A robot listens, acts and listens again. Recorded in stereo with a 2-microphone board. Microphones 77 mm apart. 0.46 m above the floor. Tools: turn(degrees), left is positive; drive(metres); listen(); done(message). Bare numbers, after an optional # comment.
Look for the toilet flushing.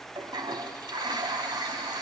turn(-90)
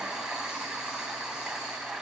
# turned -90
# So it is at 10° right.
turn(-10)
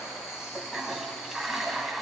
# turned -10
done("Found it: a toilet flushing, straight ahead.")